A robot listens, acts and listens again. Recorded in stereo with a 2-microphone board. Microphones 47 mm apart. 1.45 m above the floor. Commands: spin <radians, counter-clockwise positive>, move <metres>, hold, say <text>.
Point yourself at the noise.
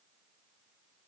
hold
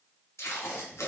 spin 1.22
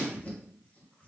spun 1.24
spin 0.52
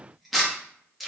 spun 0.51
say Found it: tape being pulled, straight ahead, under 1 m away.